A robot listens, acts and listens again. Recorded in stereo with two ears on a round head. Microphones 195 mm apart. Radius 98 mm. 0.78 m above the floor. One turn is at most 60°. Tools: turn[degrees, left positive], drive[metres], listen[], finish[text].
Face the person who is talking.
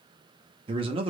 Thought: The man speaking: about 25° right or 155° right.
Action: turn[-25]
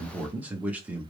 Thought: So it is at 10° right.
Action: turn[-10]
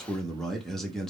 Action: finish[Found it: a man speaking, straight ahead, under 1 m away.]